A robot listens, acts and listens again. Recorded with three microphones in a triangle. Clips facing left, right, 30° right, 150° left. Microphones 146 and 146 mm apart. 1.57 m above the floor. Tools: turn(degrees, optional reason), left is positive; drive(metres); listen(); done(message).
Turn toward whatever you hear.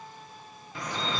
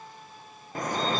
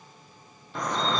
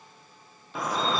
turn(degrees=-125, reason="The dripping: 125° right.")
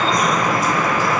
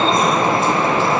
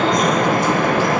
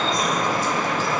turn(degrees=-30, reason="The dripping is now 30° right.")
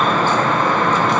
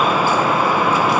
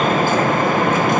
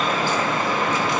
turn(degrees=-10, reason="The dripping is now 10° right.")
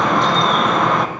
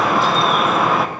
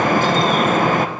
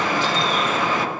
done("Facing the dripping, under 1 m away.")